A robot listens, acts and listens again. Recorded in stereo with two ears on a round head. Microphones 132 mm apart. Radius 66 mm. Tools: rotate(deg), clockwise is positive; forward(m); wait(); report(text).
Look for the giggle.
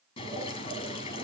wait()
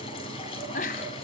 rotate(-55)
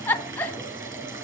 rotate(-15)
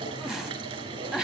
report("Facing the giggle.")